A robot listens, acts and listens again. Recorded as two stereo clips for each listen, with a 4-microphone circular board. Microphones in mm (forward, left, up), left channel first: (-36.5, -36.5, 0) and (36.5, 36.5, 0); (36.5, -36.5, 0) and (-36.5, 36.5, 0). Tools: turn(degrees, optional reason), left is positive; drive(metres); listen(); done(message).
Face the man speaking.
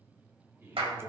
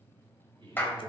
turn(degrees=110, reason="The man speaking: 110° left.")
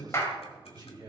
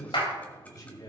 done("Facing the man speaking.")